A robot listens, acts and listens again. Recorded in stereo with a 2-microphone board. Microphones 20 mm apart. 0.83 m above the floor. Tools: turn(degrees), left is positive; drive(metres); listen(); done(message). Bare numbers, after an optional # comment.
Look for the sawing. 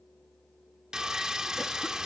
# The sawing: about 35° right or 145° right.
turn(-35)
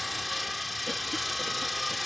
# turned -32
done("Facing the sawing.")